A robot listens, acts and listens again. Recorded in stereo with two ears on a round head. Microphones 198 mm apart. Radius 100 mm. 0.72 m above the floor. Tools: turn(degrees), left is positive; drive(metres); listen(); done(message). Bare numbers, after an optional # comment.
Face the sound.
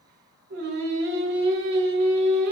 # The singing: about 45° right or 135° right.
turn(-45)
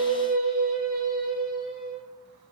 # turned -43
done("Facing the singing, 1 to 2 m away.")